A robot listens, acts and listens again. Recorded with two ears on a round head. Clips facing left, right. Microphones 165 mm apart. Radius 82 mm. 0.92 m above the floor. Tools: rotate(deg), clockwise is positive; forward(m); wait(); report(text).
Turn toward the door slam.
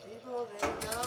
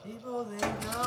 rotate(20)
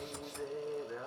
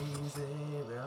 wait()
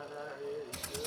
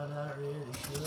report("I heard a door slam, but can't make it out now. It was about straight ahead or 140° right.")